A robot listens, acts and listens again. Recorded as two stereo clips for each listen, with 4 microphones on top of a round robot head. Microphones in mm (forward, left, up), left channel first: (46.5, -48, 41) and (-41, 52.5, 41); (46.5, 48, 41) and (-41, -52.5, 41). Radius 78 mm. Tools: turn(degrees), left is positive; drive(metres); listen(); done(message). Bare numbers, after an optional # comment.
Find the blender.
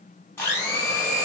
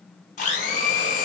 # The blender: 25° left.
turn(25)
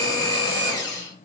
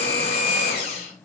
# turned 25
# The blender is now 10° left.
turn(10)
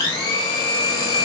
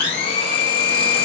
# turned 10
done("Facing the blender.")